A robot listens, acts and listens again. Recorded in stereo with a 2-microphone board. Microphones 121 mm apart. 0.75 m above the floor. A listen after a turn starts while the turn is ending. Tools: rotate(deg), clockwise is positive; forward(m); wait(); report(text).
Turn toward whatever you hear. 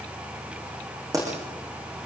rotate(30)
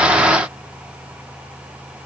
wait()
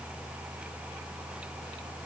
report("I heard a pop, but can't make it out now. It was about straight ahead or 120° right.")